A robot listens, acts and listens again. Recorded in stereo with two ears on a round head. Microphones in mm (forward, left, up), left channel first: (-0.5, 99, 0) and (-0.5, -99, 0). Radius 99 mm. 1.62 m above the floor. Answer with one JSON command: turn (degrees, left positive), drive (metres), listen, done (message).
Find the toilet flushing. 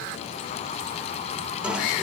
{"turn": -30}
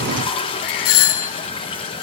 {"turn": 25}
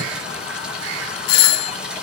{"done": "Found it: a toilet flushing, straight ahead, over 4 m away."}